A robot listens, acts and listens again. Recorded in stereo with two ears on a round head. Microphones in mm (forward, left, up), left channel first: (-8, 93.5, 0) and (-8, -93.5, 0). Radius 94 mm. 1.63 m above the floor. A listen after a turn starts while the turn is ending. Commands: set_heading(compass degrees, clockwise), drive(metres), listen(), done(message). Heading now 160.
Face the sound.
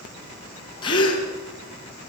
set_heading(135)
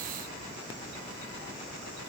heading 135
listen()
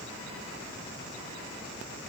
done("I heard a gasp, but can't make it out now. It was about straight ahead or 130° left.")